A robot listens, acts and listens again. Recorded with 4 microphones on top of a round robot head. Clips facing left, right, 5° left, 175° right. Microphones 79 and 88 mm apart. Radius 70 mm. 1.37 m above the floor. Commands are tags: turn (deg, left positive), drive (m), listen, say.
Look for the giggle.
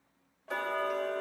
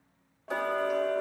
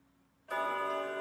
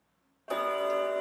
<listen/>
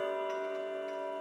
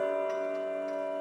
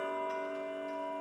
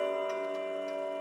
<listen/>
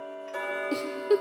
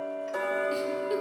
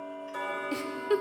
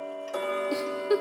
<turn deg="115"/>
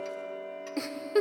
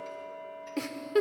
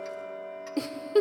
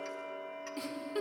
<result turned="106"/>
<turn deg="10"/>
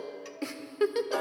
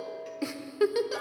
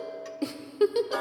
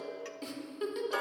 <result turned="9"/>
<say>Facing the giggle, under 1 m away.</say>